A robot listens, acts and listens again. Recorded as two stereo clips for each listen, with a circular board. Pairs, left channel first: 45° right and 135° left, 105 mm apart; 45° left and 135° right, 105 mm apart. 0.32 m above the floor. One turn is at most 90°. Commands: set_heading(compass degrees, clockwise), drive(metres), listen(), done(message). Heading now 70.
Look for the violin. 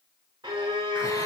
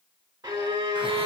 set_heading(340)
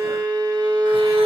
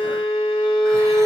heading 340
set_heading(250)
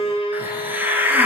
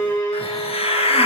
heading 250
set_heading(265)
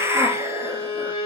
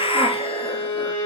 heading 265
done("Facing the violin, over 4 m away.")